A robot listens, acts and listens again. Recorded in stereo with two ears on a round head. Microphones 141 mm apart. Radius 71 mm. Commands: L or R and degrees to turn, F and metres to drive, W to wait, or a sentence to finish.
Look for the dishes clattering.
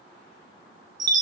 W
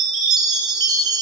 W
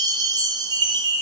I can't make out dishes clattering to turn to.